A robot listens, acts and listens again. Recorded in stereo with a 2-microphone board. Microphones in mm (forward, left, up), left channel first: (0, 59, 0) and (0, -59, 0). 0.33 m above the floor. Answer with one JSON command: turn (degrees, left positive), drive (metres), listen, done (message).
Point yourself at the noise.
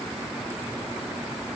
{"listen": true}
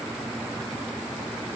{"listen": true}
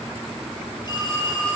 {"turn": 40}
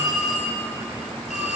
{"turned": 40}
{"turn": 100}
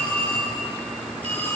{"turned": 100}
{"turn": 15}
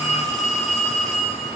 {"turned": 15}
{"done": "Found it: a phone ringing, straight ahead, over 4 m away."}